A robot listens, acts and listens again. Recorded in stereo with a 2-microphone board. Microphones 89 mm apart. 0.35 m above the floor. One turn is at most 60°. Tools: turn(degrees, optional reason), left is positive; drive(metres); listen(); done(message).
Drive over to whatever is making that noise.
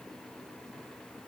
listen()
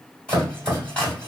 turn(degrees=30)
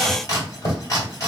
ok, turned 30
turn(degrees=60, reason="So it is at 135° left.")
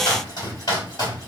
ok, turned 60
turn(degrees=60, reason="The chopping is now 90° left.")
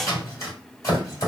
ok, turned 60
turn(degrees=45, reason="The chopping is now 45° left.")
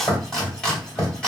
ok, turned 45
turn(degrees=10, reason="The chopping is now 10° left.")
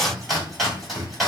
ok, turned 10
drive(metres=1.0)
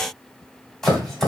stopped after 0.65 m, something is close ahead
done("Arrived at the chopping, straight ahead.")